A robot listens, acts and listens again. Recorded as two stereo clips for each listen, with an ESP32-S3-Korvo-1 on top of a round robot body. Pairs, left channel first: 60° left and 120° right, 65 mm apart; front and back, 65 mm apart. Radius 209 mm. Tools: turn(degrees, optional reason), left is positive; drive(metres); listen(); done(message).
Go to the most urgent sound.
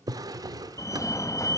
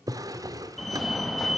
turn(degrees=90, reason="The fire alarm: 90° left.")
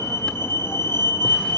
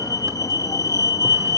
turn(degrees=15, reason="The fire alarm is now 15° left.")
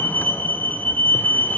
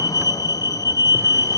drive(metres=1.0)
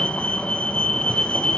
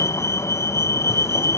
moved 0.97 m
drive(metres=1.0)
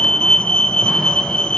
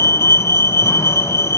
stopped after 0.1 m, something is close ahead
done("I am next to the fire alarm.")